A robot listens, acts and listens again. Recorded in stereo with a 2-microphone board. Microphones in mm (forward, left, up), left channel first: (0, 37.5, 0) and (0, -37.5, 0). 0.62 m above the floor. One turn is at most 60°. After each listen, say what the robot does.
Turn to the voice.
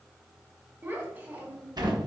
Turn 30° right.
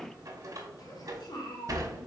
Turn 60° left.
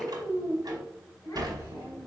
Turn 45° left.
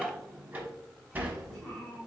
Turn 10° left.
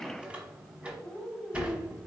Facing the child speaking.